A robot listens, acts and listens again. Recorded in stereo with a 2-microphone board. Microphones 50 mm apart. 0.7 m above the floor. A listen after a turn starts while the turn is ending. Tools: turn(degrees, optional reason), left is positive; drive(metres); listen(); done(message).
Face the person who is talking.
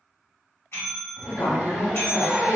turn(degrees=70, reason="The woman speaking: about 70° left or 110° left.")
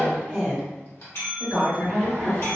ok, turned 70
done("Facing the woman speaking.")